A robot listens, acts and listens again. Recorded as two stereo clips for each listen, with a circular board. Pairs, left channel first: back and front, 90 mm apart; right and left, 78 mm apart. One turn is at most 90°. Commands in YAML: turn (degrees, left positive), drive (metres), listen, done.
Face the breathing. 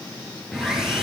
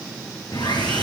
listen: true
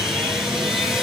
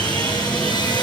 listen: true
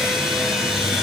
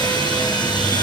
done: "I can't make out breathing, only sawing."